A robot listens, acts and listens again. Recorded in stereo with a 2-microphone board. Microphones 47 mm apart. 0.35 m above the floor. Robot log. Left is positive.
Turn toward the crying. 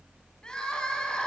note: The crying: about 20° left or 160° left.
cmd yaw +20
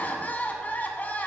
note: So it is at 140° left.
cmd yaw +140
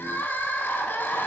note: The crying is now 50° left.
cmd yaw +50
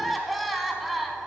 end: Found it: crying, straight ahead.